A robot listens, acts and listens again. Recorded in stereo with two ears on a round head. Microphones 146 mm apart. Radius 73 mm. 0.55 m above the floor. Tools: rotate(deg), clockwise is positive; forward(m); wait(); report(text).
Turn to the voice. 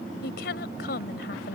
rotate(-65)
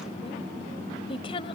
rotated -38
rotate(-35)
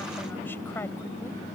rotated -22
rotate(-15)
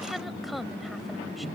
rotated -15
report("Facing the woman speaking.")